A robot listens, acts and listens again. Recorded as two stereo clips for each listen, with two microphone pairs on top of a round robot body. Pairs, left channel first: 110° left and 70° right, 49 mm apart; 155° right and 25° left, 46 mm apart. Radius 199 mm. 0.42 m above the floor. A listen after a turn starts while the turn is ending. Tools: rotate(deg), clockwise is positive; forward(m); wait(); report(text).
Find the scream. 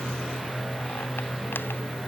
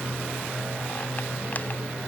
wait()
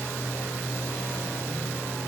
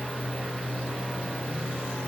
wait()
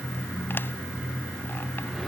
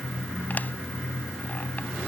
report("I can't make out a scream to turn to.")